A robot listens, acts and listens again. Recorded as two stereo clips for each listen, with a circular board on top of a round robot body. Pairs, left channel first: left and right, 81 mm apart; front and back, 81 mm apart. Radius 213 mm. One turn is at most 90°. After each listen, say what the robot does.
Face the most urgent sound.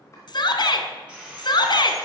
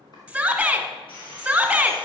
Turn 90° left.
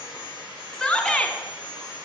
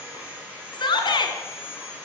Turn 10° left.
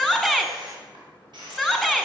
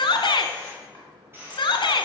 Facing the shout, 1 to 2 m away.